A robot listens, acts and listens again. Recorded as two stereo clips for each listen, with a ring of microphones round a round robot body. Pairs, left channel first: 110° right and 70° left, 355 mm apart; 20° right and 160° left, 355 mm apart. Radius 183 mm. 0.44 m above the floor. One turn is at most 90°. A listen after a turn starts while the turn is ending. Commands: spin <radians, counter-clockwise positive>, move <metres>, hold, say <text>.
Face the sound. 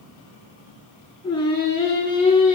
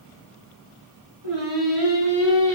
spin 1.57
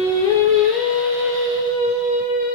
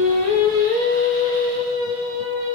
spin 1.57
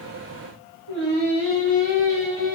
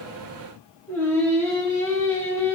spin 1.05
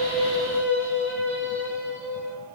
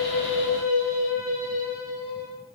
spin -0.26
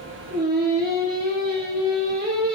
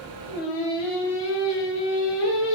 say Found it: singing, straight ahead.